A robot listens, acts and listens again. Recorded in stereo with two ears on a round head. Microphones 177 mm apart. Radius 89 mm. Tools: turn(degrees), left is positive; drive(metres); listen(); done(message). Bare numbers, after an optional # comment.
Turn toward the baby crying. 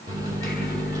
listen()
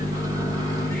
listen()
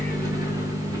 done("I can't make out a baby crying to turn to.")